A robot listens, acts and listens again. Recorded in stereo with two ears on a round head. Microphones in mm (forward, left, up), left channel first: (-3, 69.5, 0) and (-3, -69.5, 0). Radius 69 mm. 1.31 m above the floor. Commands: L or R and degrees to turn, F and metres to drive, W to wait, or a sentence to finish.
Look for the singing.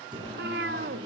R30
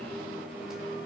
Found it: singing, straight ahead.